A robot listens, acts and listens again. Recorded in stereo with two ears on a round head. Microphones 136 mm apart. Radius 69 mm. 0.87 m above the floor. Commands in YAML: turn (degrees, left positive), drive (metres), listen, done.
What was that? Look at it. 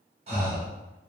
turn: -40
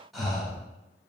done: "Facing the breathing, 1 to 2 m away."